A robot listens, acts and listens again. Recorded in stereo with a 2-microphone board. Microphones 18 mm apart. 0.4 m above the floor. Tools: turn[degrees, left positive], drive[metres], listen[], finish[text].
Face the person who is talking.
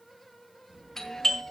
Thought: The child speaking: about 70° right or 110° right.
Action: turn[-70]
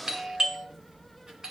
Thought: So it is at 35° right.
Action: turn[-35]
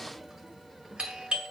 Thought: The child speaking is now 15° right.
Action: turn[-15]
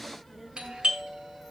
Action: finish[Found it: a child speaking, straight ahead.]